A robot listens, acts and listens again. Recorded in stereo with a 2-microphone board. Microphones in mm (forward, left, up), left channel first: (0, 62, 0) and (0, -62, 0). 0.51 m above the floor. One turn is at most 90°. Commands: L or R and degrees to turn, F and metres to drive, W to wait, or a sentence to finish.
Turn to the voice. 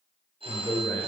L25
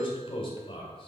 L90
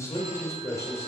L30
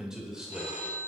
Facing the man speaking, 2 to 4 m away.